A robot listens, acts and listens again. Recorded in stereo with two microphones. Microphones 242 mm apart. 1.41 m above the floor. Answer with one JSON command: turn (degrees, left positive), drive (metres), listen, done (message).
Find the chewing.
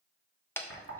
{"turn": 30}
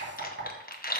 {"turn": 145}
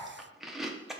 {"done": "Found it: chewing, straight ahead."}